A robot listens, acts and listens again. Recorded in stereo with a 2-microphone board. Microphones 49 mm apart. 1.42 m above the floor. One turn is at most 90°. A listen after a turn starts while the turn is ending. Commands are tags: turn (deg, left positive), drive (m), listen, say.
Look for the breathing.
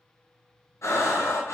<turn deg="90"/>
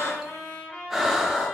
<turn deg="-10"/>
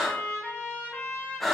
<say>Found it: breathing, straight ahead, under 1 m away.</say>